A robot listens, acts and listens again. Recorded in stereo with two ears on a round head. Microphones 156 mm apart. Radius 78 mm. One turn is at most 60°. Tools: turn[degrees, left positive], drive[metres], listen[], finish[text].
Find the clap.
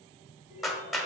Action: turn[30]
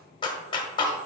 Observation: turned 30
Thought: So it is at 150° left.
Action: turn[60]
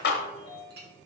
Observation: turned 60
Thought: The clap is now 85° left.
Action: turn[60]
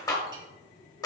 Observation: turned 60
Thought: The clap is now 25° left.
Action: turn[25]
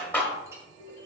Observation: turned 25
Thought: The clap is now 10° left.
Action: turn[10]
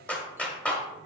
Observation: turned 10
Action: finish[Found it: a clap, straight ahead, 1 to 2 m away.]